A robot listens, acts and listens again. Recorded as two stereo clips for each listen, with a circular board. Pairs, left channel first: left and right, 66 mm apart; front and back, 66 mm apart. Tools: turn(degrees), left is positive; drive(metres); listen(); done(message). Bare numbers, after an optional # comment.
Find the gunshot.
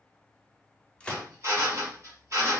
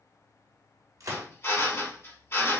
# The gunshot: 160° left.
turn(160)
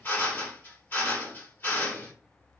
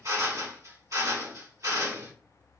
done("Facing where the gunshot came from. I can't hear it now.")